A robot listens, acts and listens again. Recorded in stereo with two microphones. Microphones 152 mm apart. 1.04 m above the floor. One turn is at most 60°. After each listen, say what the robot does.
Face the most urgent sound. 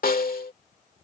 Keep listening.
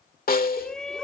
Turn 30° left.
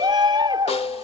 Turn 30° right.
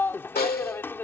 Turn 15° left.
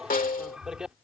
Found it: a shout, straight ahead.